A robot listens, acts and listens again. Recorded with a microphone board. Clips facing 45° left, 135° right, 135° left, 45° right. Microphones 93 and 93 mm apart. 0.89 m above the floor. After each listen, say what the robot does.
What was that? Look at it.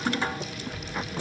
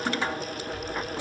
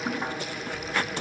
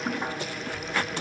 Turn 40° left.
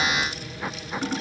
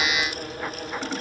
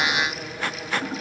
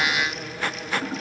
Keep listening.
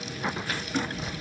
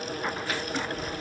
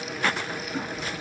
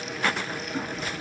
Found it: a child speaking, straight ahead.